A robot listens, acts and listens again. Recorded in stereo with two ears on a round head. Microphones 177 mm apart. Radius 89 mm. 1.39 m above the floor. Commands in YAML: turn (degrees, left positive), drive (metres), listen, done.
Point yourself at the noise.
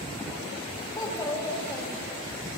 turn: 20
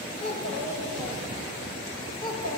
turn: 20
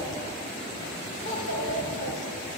turn: 40
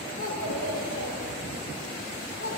turn: 100
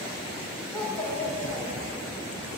turn: 10
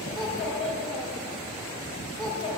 done: "Found it: a child speaking, straight ahead."